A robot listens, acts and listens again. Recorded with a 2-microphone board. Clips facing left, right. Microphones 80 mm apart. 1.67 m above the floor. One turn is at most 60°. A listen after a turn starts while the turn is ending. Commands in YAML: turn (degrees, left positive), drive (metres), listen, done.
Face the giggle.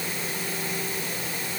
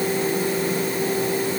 listen: true
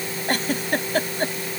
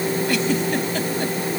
turn: 45
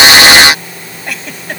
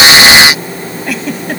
done: "Facing the giggle."